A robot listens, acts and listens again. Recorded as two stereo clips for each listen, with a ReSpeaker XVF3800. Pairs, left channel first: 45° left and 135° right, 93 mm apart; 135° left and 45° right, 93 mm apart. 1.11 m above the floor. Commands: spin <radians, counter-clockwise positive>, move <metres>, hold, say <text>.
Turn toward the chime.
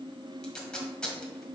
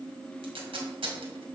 hold
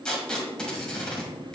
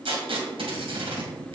hold
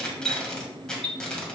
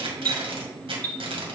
spin -2.62
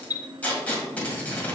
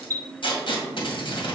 say Found it: a chime, straight ahead.